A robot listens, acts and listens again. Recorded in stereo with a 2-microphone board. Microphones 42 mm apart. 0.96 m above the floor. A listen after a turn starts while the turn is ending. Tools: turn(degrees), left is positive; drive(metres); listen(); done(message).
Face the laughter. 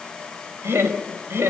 turn(degrees=-90)
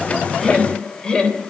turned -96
turn(degrees=25)
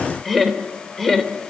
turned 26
turn(degrees=10)
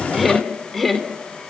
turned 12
turn(degrees=10)
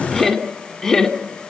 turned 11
turn(degrees=10)
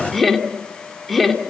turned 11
done("Facing the laughter, 2 to 4 m away.")